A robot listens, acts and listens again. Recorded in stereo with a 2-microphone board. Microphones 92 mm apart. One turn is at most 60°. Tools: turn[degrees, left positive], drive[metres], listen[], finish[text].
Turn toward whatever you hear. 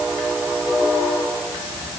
Action: listen[]
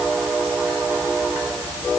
Action: listen[]
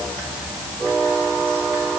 Action: finish[I can't make out anything.]